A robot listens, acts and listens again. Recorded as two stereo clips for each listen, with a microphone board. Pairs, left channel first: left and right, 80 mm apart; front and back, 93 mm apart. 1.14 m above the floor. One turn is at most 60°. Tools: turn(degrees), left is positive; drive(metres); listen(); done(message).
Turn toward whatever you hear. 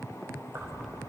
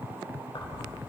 turn(degrees=-35)
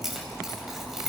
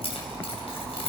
done("Found it: keys jangling, straight ahead, 2 to 4 m away.")